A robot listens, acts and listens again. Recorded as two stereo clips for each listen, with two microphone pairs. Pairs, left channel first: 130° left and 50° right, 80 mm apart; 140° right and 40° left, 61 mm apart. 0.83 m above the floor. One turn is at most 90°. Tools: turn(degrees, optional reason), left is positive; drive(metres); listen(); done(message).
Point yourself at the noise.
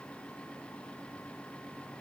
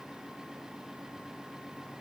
listen()
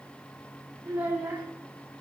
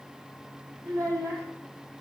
turn(degrees=15, reason="The child speaking: 15° left.")
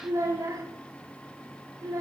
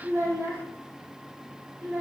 done("Found it: a child speaking, straight ahead.")